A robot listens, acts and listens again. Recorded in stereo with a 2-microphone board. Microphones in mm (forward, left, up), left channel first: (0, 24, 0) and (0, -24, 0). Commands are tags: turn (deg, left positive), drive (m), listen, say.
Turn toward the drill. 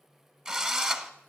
<turn deg="-30"/>
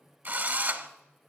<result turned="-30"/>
<turn deg="-135"/>
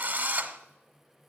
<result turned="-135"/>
<turn deg="-35"/>
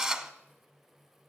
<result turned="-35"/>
<turn deg="-10"/>
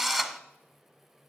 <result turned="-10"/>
<say>Facing the drill, under 1 m away.</say>